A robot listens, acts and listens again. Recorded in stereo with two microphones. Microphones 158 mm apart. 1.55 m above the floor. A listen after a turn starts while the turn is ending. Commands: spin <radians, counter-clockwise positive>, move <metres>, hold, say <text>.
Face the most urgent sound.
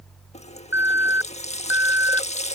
spin -0.52
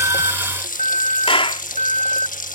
spin -2.27
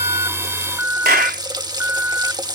spin -0.17
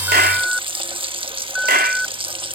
say Facing the alarm.